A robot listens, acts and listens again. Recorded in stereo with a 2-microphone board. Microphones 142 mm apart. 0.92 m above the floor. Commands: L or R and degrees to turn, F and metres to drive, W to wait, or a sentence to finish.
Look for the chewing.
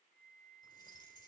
W
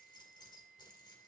W
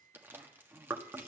R30
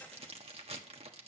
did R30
R135
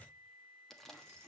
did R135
Found it: chewing, straight ahead, 1 to 2 m away.